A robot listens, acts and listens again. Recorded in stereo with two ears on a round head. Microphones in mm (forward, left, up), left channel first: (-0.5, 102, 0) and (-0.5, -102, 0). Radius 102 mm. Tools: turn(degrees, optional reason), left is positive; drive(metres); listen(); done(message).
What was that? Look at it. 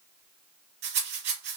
turn(degrees=-50, reason="The rattle: about 50° right or 130° right.")
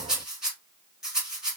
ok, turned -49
done("Found it: a rattle, straight ahead, 1 to 2 m away.")